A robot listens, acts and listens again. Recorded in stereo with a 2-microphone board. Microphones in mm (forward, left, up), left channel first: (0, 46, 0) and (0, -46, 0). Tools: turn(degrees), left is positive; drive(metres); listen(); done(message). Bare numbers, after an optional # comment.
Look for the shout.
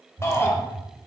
# The shout: about 30° left or 150° left.
turn(30)
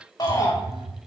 # So it is at 115° left.
turn(115)
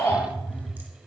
# The shout is now 30° left.
turn(30)
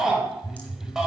done("Facing the shout.")